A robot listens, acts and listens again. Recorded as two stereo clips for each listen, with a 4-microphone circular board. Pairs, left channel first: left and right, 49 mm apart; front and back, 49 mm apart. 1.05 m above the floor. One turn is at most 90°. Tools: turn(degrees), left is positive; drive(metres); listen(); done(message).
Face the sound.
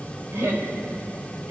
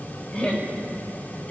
turn(degrees=-65)
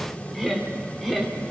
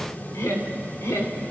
done("Facing the laughter.")